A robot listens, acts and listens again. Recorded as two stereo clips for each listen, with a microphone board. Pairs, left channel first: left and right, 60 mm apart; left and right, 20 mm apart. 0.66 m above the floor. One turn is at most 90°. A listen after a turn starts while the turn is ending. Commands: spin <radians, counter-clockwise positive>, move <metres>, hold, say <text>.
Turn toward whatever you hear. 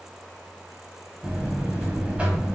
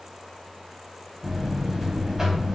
spin -0.35
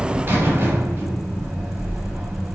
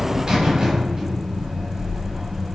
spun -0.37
spin -1.57
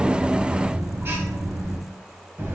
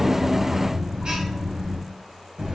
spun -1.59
spin -0.79
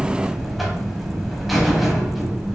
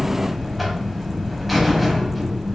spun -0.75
say Facing the buzzer.